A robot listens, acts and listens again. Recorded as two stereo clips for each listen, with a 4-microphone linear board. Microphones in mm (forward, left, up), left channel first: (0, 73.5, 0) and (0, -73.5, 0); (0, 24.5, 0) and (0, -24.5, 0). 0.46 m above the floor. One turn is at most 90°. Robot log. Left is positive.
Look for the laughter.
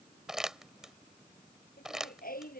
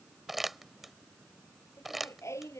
cmd yaw +90
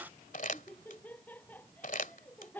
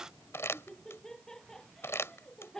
note: So it is at 10° left.
cmd yaw +10
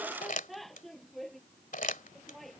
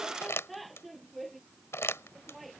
end: Found it: laughter, straight ahead.